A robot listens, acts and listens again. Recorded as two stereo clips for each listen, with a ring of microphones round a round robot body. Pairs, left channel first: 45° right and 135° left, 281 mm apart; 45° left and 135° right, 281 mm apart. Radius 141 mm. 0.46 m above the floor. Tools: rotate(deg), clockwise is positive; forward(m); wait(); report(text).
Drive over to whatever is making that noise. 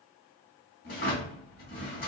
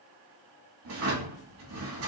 rotate(100)
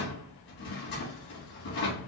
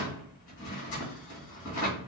forward(1.0)
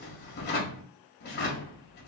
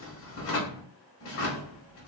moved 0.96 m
forward(1.0)
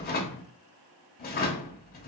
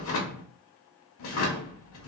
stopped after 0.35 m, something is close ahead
rotate(-10)
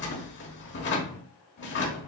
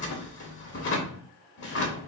report("Arrived at the drawer, straight ahead.")